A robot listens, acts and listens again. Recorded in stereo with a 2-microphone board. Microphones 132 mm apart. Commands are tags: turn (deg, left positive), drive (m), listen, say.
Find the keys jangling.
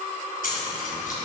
<turn deg="90"/>
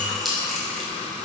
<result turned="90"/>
<say>Found it: keys jangling, straight ahead.</say>